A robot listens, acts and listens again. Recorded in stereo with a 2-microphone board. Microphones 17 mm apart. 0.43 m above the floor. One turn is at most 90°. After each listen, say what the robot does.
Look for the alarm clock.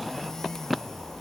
Keep listening.
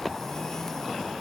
Keep listening.
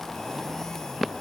I can't make out an alarm clock to turn to.